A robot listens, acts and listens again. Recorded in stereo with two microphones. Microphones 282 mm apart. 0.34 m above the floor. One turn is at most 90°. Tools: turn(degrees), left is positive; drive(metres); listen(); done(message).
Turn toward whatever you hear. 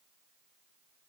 listen()
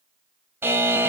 turn(degrees=-30)
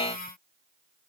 turn(degrees=20)
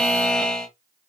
done("Facing the buzzer, under 1 m away.")